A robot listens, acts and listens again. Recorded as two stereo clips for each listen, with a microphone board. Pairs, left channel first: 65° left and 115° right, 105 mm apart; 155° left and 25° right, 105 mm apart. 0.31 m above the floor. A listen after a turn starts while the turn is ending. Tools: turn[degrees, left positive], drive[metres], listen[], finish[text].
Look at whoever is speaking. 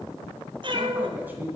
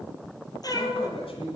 Thought: The man speaking: straight behind.
Action: turn[180]
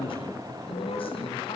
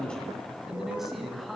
Thought: The man speaking is now 70° left.
Action: turn[70]
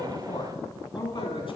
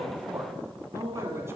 Thought: The man speaking is now 40° left.
Action: turn[40]
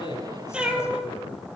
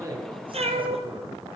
Action: listen[]
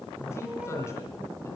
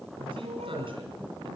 Action: finish[Found it: a man speaking, straight ahead.]